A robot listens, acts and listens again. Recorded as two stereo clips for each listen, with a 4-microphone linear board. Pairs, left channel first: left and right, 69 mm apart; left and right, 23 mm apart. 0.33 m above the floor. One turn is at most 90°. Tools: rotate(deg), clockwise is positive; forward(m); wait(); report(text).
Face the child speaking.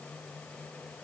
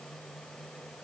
wait()
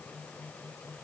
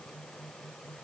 wait()
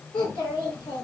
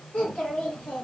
rotate(-90)
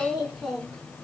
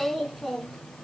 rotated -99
report("Facing the child speaking.")